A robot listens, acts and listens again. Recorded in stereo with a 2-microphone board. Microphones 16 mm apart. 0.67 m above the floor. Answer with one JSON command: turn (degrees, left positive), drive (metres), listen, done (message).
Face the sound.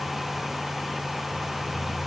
{"listen": true}
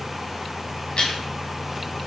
{"turn": 60}
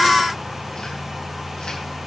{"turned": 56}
{"listen": true}
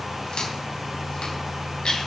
{"turn": 60}
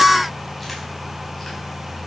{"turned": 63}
{"listen": true}
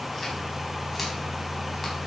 {"listen": true}
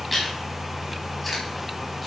{"done": "Facing the chewing."}